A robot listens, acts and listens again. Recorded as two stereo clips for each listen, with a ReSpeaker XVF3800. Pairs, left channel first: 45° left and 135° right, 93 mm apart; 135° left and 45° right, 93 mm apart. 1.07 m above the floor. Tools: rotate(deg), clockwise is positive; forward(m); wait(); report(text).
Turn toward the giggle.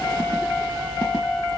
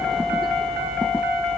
wait()
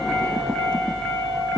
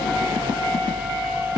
wait()
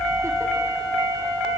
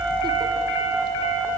report("I can't make out a giggle to turn to.")